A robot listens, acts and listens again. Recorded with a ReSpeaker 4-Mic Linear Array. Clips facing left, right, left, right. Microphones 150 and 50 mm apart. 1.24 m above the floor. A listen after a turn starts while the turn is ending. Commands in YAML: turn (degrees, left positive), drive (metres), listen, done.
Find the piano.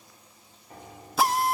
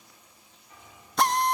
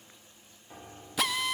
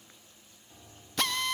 turn: 50
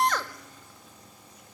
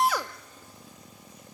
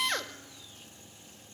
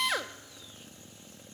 listen: true
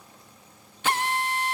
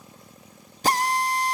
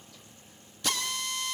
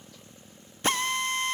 listen: true
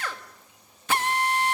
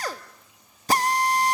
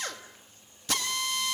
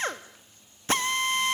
done: "I heard a piano, but can't make it out now. It was about straight ahead or 80° left."